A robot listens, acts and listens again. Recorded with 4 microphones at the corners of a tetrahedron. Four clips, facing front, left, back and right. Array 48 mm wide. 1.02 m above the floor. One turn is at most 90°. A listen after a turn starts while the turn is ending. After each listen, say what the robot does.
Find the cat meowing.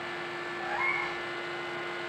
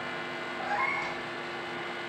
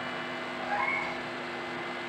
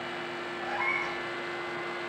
Turn 90° left.
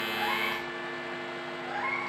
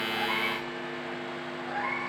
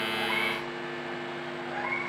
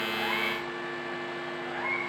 Turn 40° left.
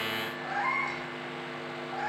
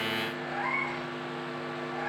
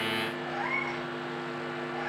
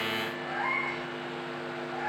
Found it: a cat meowing, straight ahead, over 4 m away.